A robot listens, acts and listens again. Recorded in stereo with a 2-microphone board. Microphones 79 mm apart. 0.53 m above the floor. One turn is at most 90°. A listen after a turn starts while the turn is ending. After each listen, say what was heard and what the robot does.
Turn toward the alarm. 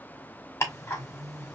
Keep listening.
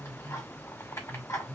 Keep listening.
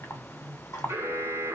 The alarm: about 35° right or 145° right. Turn 35° right.
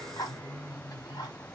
Keep listening.
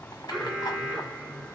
Found it: an alarm, straight ahead.